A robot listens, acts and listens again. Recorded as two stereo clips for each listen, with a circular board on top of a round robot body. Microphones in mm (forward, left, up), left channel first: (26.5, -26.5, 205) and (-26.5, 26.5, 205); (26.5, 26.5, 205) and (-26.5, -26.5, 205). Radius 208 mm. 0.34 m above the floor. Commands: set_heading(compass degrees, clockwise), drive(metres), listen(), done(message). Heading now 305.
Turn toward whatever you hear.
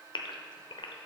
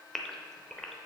set_heading(345)
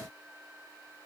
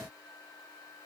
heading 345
done("I heard a gasp from this way, but can't make it out now.")